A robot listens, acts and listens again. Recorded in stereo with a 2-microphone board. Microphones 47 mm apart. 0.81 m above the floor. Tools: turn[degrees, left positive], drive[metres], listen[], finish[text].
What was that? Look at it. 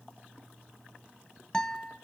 Action: turn[30]
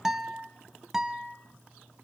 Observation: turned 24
Thought: So it is at 10° right.
Action: turn[-10]
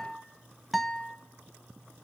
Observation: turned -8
Action: finish[Found it: a guitar, straight ahead.]